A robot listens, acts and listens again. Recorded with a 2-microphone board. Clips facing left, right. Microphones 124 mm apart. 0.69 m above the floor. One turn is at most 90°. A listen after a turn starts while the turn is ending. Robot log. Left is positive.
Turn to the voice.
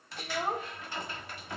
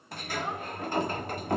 note: The child speaking: about 45° left or 135° left.
cmd yaw +45
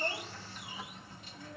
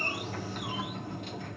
cmd idle
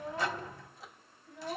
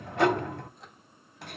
note: So it is at 100° left.
cmd yaw +90
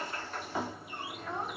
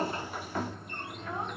note: Nothing new. It was at 10° left.
cmd yaw +10
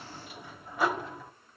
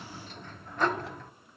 cmd idle
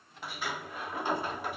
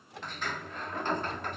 end: I heard a child speaking from this way, but can't make it out now.